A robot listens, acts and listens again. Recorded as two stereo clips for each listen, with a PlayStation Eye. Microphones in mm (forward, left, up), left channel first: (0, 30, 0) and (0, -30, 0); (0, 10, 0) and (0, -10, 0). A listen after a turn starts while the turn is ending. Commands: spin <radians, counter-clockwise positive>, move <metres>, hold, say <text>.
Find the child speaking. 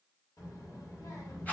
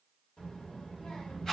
spin 1.22
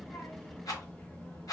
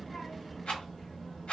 spin 0.35
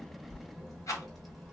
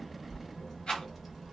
say Found it: a child speaking, straight ahead.